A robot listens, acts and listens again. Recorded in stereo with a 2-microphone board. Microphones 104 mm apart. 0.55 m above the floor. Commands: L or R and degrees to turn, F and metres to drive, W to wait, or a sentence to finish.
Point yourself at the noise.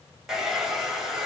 R30
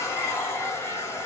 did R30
L25
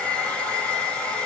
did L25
L10
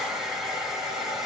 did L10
Facing the hair dryer, 1 to 2 m away.